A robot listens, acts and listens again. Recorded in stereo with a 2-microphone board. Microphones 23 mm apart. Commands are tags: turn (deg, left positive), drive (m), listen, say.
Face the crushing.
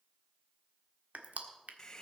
<turn deg="-90"/>
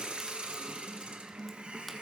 <listen/>
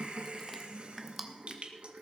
<say>Found it: crushing, straight ahead, 1 to 2 m away.</say>